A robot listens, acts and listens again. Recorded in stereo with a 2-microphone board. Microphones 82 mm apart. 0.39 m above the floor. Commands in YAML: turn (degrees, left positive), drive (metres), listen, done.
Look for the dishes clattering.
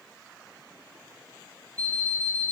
listen: true
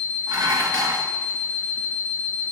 turn: -65
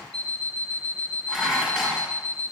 done: "Facing the dishes clattering."